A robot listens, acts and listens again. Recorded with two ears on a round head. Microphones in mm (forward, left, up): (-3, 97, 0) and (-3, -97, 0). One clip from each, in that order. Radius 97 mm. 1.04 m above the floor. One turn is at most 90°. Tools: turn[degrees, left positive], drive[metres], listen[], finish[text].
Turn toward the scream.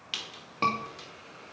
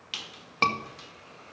Thought: The scream: about 50° right or 130° right.
Action: turn[-50]
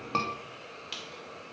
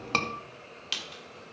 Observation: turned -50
Thought: So it is at 75° right.
Action: turn[-75]
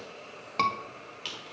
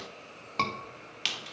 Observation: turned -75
Action: finish[Found it: a scream, straight ahead.]